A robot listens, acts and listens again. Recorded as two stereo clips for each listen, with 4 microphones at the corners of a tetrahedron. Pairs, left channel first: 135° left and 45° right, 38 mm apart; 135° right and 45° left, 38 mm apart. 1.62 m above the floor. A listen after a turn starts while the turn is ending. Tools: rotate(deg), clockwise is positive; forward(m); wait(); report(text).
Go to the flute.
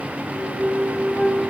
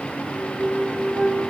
rotate(85)
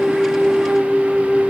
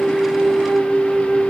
rotate(-10)
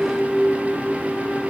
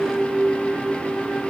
forward(1.0)
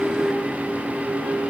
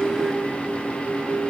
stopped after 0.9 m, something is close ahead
wait()
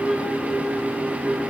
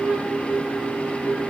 report("I am next to the flute.")